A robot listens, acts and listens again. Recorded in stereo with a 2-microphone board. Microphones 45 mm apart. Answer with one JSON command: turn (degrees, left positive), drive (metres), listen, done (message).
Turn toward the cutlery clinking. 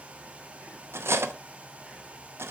{"turn": -75}
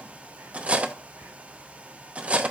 {"turn": -30}
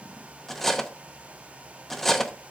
{"turn": 10}
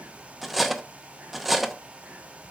{"done": "Found it: cutlery clinking, straight ahead."}